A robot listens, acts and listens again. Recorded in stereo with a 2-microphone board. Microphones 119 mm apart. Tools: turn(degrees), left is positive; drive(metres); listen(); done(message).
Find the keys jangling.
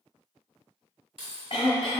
turn(degrees=-55)
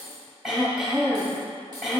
turn(degrees=-25)
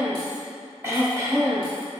listen()
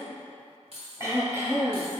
turn(degrees=-55)
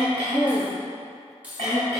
turn(degrees=-15)
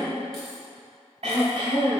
listen()
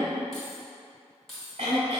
done("Facing the keys jangling.")